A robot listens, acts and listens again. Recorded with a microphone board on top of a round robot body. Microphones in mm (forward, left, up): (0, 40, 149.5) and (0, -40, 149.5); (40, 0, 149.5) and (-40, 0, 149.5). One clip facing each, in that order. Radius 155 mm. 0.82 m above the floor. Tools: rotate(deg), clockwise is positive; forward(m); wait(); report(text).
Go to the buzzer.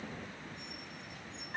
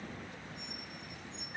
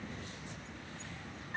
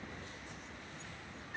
wait()
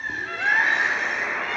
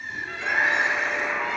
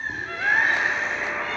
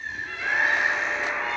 rotate(125)
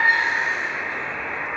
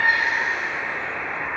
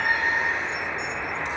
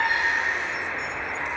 rotate(20)
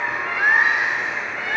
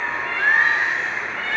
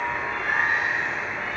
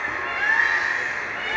rotate(10)
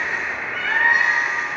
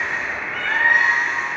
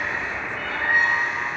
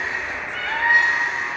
forward(1.0)
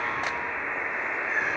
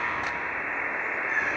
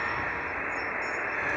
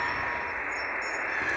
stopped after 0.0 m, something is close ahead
report("Something is in my way. I am facing the buzzer but have not reached it.")